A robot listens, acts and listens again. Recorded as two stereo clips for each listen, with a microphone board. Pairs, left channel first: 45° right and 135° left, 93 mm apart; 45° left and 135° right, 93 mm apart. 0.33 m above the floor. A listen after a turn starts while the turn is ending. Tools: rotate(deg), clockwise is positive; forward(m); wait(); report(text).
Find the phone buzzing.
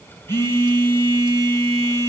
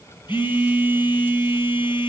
rotate(-15)
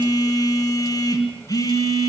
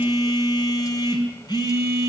report("Facing the phone buzzing, over 4 m away.")